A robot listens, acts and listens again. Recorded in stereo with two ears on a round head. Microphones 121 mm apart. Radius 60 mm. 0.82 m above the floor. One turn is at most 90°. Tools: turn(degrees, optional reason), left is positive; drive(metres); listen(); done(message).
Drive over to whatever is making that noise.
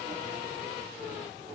listen()
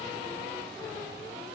listen()
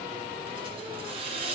turn(degrees=-40, reason="The hiss: about 40° right or 140° right.")
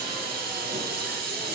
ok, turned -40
turn(degrees=-90, reason="So it is at 95° right.")
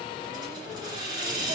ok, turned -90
turn(degrees=-35, reason="The hiss is now 35° right.")
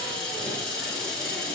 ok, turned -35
drive(metres=1.0)
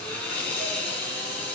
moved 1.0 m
turn(degrees=10, reason="The hiss is now 10° left.")
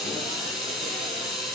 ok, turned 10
drive(metres=1.0)
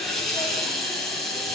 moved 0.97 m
drive(metres=1.0)
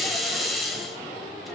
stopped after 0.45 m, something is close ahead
done("I am next to the hiss.")